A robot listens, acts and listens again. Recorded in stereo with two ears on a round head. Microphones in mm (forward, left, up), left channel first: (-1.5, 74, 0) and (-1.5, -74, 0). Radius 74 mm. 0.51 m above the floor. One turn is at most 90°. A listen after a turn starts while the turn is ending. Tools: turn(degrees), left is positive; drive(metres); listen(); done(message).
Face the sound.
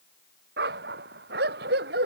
turn(degrees=-65)
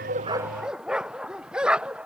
done("Facing the dog barking.")